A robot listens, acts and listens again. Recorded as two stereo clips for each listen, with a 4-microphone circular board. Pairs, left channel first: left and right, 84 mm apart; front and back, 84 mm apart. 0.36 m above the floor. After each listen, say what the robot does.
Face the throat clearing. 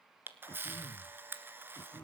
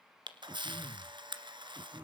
Turn 145° left.
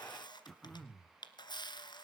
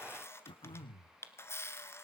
Facing the throat clearing, 1 to 2 m away.